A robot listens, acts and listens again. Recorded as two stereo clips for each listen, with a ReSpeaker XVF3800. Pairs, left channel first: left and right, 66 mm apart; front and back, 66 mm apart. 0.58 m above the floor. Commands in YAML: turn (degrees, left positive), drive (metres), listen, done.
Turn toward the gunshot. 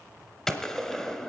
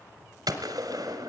turn: 175
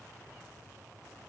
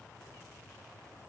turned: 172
done: "Facing where the gunshot came from. I can't hear it now."